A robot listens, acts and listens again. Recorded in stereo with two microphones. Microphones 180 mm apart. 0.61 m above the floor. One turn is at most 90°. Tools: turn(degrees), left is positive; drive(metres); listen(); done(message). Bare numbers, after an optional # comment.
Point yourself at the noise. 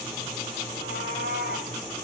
# The cat meowing: about 60° left or 120° left.
turn(60)
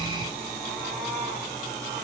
done("Facing the cat meowing.")